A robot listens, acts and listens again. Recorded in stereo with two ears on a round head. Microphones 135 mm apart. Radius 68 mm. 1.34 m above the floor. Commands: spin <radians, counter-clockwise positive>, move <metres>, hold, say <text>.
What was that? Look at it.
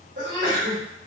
spin -1.13
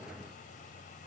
hold
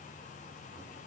say I heard a sneeze, but can't make it out now. It was about straight ahead or 50° right.